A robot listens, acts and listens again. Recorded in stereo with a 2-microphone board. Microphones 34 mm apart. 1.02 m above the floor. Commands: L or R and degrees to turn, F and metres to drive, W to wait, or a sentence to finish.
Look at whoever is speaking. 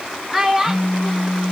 R30
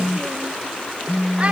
W
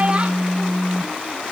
W
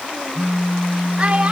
I heard a child speaking, but can't make it out now. It was about 20° left or 140° right.